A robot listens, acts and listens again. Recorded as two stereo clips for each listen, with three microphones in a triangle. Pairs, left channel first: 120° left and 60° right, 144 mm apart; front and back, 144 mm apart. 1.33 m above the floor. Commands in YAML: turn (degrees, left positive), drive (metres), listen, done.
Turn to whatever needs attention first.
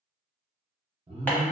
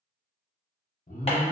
turn: -15
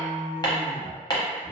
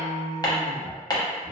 done: "Found it: an alarm, straight ahead, under 1 m away."